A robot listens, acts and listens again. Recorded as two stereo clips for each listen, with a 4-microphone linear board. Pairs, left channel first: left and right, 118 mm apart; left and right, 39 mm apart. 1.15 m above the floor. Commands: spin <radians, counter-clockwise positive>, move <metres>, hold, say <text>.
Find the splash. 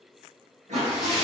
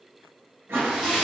spin -0.52
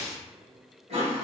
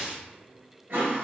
spin -2.53
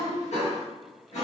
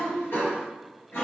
say Facing where the splash came from. I can't hear it now.